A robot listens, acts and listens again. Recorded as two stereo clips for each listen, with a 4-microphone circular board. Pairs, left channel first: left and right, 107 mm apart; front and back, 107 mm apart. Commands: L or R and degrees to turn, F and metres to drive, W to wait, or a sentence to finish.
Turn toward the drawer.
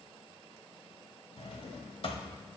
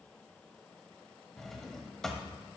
L85
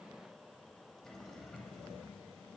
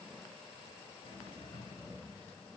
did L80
Facing the drawer, 1 to 2 m away.